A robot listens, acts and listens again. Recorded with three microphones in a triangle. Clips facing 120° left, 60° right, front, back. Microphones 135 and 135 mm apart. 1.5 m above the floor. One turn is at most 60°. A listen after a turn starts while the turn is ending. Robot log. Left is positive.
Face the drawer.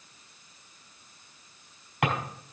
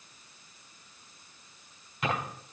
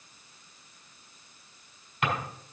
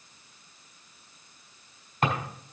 note: The drawer: 130° left.
cmd yaw +60
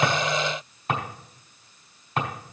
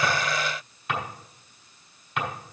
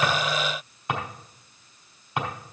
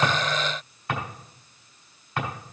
note: The drawer is now 70° left.
cmd yaw +60
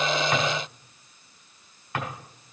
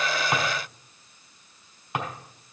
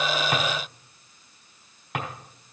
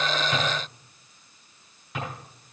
note: The drawer is now 10° left.
cmd yaw +10
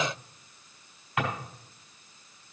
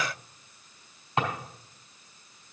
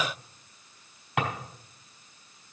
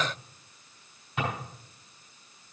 end: Facing the drawer, 2 to 4 m away.